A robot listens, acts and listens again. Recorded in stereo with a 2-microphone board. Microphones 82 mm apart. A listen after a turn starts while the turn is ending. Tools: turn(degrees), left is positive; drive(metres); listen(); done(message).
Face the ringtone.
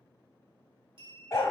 listen()
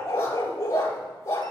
listen()
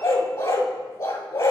done("I can't make out a ringtone, only a clink and a dog barking.")